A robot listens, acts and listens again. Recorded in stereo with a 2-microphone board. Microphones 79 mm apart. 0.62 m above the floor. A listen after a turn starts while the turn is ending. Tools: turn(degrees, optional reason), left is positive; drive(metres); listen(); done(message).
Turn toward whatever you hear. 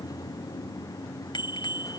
turn(degrees=90)
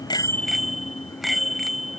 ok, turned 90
done("Facing the bicycle bell.")